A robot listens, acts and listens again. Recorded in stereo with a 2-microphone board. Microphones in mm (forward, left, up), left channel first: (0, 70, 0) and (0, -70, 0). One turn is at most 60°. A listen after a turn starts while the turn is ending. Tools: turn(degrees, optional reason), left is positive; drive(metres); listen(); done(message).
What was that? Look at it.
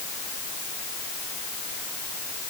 listen()
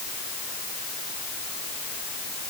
listen()
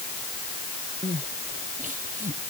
turn(degrees=-60, reason="The crying: about 65° right or 115° right.")
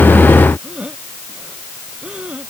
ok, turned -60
done("Found it: crying, straight ahead.")